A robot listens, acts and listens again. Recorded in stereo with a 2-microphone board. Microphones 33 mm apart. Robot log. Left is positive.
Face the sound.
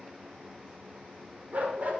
note: The dog barking: about 50° right or 130° right.
cmd yaw -50
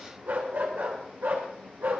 note: So it is at 65° right.
cmd yaw -65
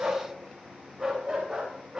note: The dog barking is now 10° right.
cmd yaw -10
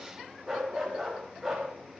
end: Facing the dog barking, over 4 m away.